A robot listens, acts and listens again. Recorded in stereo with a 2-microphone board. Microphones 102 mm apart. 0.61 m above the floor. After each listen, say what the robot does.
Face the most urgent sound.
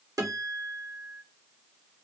Keep listening.
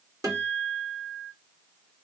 Keep listening.
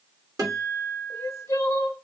Turn 25° left.
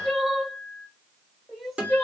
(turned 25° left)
Facing the crying, 1 to 2 m away.